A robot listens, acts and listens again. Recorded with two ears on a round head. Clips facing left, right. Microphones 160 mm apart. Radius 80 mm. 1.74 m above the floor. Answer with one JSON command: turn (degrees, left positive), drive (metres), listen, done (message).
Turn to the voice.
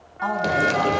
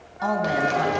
{"turn": -35}
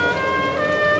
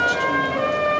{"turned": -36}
{"listen": true}
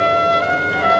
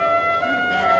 {"listen": true}
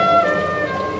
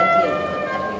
{"done": "I heard a woman speaking, but can't make it out now. It was about 5° left or 110° right."}